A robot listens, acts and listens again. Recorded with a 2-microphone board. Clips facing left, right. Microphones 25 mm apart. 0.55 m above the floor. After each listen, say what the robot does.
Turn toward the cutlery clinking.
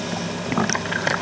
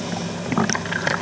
Keep listening.
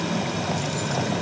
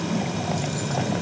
Keep listening.
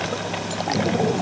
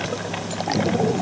I can't make out cutlery clinking.